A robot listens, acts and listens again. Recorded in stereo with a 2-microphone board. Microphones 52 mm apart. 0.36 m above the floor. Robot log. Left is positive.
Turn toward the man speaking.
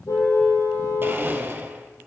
cmd idle
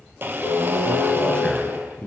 note: The man speaking: about 15° left or 165° left.
cmd yaw +15
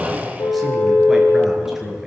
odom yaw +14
cmd yaw -30
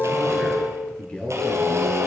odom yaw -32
note: So it is at 20° left.
cmd yaw +20
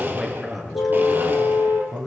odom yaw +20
end: Found it: a man speaking, straight ahead.